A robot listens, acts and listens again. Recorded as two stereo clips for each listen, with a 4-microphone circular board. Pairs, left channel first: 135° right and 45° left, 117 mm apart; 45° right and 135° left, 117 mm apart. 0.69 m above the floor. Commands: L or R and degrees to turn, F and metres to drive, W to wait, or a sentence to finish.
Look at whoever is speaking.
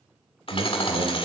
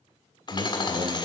L90
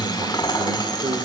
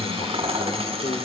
Facing the man speaking.